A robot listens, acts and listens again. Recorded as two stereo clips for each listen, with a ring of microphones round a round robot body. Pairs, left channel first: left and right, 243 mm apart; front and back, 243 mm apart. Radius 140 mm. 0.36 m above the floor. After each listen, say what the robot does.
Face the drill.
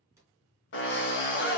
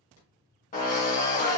Turn 55° left.
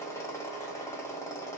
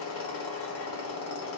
Turn 10° left.
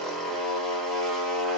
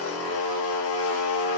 Found it: a drill, straight ahead, 1 to 2 m away.